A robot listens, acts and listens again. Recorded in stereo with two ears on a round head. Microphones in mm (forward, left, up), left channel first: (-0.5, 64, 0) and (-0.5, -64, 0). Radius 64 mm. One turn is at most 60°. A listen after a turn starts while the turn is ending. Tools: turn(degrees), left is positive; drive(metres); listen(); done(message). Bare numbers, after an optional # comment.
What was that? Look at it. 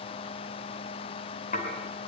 # The dishes clattering: about 55° left or 125° left.
turn(55)
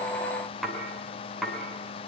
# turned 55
done("Found it: dishes clattering, straight ahead.")